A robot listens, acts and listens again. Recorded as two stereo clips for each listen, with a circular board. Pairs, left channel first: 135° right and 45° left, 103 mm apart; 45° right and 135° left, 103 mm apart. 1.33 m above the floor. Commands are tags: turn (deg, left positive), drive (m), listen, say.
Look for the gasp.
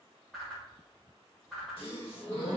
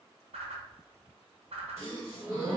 <turn deg="-160"/>
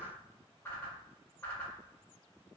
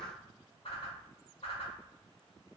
<say>I heard a gasp from this way, but can't make it out now.</say>